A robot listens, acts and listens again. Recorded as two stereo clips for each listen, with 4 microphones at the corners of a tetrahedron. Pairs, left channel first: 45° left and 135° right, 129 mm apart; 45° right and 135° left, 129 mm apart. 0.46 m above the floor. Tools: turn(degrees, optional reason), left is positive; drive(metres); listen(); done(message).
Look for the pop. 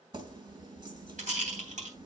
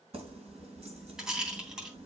listen()
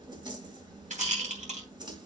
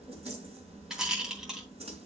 listen()
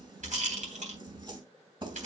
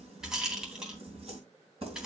done("I can't make out a pop, only a rattle and keys jangling.")